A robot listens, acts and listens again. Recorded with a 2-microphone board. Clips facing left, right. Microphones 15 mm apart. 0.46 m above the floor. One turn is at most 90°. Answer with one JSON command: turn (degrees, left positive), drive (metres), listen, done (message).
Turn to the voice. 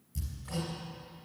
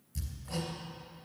{"listen": true}
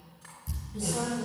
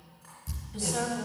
{"turn": -65}
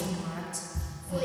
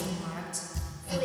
{"done": "Facing the woman speaking."}